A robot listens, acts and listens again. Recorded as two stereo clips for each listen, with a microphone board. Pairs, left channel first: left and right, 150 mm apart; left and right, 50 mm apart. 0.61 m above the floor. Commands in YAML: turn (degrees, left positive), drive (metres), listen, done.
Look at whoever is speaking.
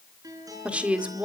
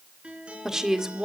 turn: -30
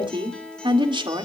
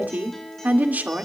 turn: -140
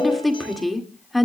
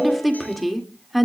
done: "Found it: a woman speaking, straight ahead, 1 to 2 m away."